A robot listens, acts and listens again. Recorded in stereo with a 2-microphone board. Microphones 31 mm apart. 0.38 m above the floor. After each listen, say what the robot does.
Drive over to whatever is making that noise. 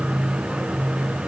Keep listening.
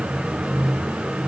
Keep listening.
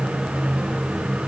I can't make out anything to turn to.